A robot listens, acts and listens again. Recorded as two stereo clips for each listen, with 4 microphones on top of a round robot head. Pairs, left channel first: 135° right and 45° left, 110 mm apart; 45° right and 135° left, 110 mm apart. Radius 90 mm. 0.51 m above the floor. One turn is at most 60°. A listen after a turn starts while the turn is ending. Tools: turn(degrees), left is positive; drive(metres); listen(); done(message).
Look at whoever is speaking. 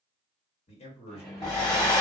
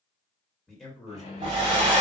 turn(degrees=-60)
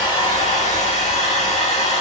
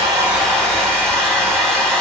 turn(degrees=-60)
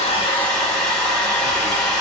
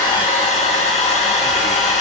turn(degrees=-10)
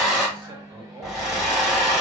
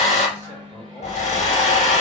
done("I heard a man speaking from this way, but can't make it out now.")